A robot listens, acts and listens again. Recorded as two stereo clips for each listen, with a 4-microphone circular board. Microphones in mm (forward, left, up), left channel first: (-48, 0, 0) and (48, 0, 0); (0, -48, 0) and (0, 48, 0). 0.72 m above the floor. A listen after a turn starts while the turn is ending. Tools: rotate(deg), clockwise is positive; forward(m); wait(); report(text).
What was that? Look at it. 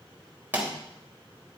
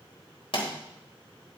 rotate(70)
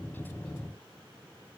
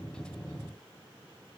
report("I heard a pop from this way, but can't make it out now.")